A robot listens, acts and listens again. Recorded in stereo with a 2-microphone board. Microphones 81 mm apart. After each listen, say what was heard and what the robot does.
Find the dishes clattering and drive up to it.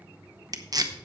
Keep listening.
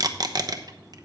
Keep listening.
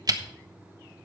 I can't make out dishes clattering, only tape being pulled.